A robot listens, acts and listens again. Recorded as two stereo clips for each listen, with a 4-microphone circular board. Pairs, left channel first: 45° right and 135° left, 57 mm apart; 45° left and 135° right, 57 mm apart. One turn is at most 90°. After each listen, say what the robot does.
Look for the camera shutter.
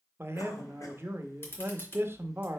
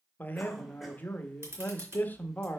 Turn 90° right.
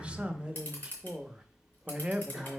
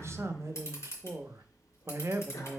Turn 10° left.
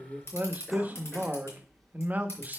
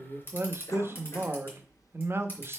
Facing the camera shutter.